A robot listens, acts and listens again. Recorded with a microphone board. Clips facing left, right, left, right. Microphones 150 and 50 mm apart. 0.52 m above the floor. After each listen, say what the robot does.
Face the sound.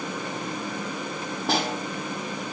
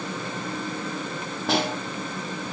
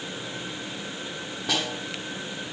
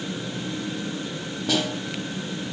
Turn 30° left.
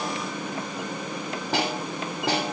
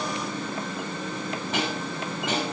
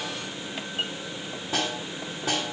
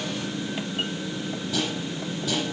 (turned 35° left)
Turn 145° left.
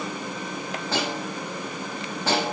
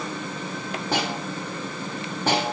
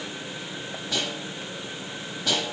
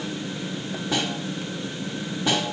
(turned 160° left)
Turn 15° right.
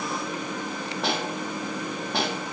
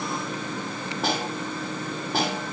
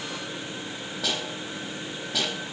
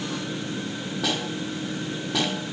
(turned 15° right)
Found it: a snare drum, straight ahead, over 4 m away.